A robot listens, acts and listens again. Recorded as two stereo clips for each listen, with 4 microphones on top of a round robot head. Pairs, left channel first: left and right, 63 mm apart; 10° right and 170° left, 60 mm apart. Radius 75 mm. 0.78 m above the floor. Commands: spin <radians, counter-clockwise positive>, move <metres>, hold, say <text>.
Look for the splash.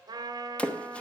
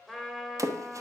spin 2.79
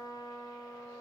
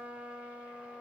say Facing where the splash came from. I can't hear it now.